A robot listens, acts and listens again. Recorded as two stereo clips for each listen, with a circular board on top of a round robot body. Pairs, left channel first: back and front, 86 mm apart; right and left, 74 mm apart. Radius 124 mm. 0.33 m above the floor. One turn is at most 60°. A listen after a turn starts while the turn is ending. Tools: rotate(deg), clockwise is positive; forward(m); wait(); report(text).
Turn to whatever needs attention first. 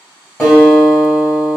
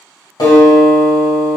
wait()
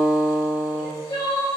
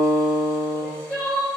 rotate(60)
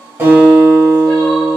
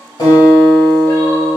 rotate(60)
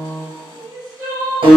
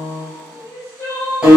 rotate(45)
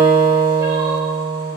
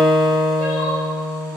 wait()
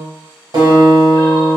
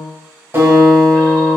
wait()
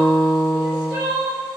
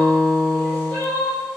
rotate(25)
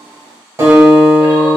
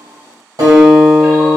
wait()
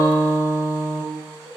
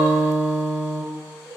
report("Found it: crying, straight ahead.")